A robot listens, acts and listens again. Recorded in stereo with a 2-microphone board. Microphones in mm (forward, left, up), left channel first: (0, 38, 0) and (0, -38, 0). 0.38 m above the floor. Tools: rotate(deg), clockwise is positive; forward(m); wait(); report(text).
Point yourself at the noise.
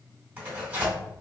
rotate(25)
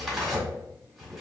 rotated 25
report("Found it: tearing paper, straight ahead, 1 to 2 m away.")